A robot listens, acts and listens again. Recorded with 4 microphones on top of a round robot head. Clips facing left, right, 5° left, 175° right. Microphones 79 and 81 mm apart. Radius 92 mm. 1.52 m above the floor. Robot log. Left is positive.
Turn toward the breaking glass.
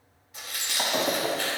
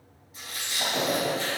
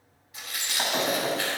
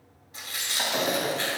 note: The breaking glass: 95° left.
cmd yaw +95
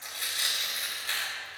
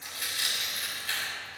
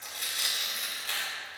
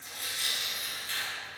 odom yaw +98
end: I heard breaking glass from this way, but can't make it out now.